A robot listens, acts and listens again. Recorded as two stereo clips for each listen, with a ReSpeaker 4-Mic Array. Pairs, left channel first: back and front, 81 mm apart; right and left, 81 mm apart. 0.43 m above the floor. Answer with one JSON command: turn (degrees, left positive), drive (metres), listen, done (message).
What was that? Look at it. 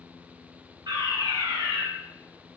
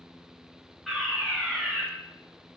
{"done": "Facing the fire alarm."}